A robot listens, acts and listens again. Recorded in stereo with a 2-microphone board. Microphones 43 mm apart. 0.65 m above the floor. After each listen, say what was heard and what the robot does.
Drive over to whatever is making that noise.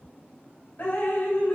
The dripping: about 55° left or 125° left. Turn 55° left.
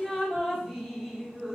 Drive 1.0 m forward.
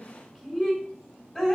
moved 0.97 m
The dripping is now 15° left. Turn 15° left.
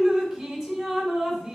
Drive 1.0 m forward.
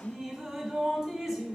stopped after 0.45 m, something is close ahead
The dripping is now 10° right. Turn 10° right.
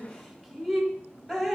Arrived at the dripping, straight ahead.